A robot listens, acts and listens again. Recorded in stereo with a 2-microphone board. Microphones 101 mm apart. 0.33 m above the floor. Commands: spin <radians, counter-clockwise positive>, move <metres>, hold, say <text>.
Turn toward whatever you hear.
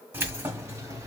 spin -0.52
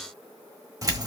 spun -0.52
spin -0.61
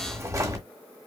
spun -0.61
spin -0.61
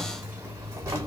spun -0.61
spin -0.52
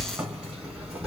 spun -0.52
spin -0.17
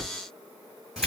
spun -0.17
say Facing the keys jangling, 2 to 4 m away.